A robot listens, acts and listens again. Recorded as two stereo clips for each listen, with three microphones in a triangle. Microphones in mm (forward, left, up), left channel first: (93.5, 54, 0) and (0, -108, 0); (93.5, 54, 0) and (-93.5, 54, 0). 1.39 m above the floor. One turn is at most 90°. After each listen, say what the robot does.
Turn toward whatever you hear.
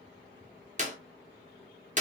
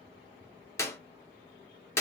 Turn 75° right.
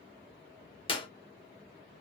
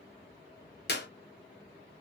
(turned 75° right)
Found it: a clap, straight ahead.